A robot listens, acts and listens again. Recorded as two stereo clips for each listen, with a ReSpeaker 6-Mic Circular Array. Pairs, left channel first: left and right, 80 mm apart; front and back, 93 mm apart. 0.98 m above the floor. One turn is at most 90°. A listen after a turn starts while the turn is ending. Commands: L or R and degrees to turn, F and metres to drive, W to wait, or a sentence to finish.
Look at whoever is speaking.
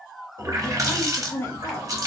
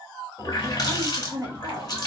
L90
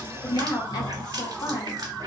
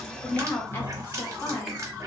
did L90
L65
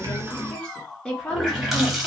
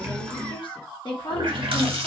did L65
L10
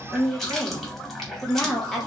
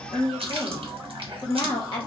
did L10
Facing the woman speaking, 1 to 2 m away.